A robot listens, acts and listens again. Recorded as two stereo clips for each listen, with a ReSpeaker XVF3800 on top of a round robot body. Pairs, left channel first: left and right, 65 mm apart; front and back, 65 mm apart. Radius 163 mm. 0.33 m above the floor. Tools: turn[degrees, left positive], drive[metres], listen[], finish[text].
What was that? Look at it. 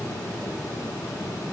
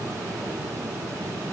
Action: listen[]
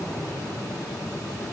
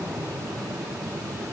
Action: listen[]
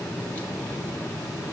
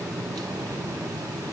Action: finish[I can't make out anything to turn to.]